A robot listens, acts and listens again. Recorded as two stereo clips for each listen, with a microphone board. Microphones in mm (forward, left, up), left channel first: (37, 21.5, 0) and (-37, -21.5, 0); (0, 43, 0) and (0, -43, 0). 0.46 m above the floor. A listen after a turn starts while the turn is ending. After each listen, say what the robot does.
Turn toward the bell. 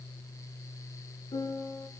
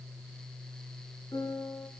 Keep listening.
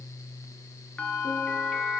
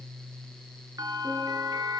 Turn 45° right.
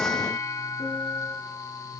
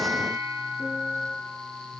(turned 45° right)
Turn 20° right.
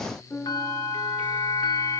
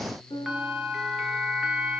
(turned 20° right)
Found it: a bell, straight ahead, over 4 m away.